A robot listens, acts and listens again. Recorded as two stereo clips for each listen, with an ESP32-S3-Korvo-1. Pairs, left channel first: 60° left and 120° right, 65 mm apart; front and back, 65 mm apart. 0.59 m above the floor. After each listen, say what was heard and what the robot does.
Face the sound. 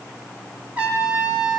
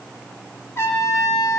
The trumpet: 50° right. Turn 50° right.
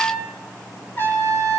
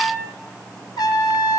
Facing the trumpet.